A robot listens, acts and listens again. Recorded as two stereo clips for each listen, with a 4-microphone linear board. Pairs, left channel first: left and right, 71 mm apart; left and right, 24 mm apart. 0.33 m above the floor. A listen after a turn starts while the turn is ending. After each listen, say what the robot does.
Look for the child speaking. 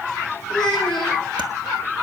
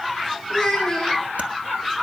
Turn 30° left.
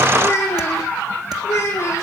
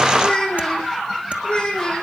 Turn 145° left.
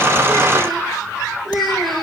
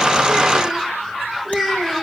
Found it: a child speaking, straight ahead, over 4 m away.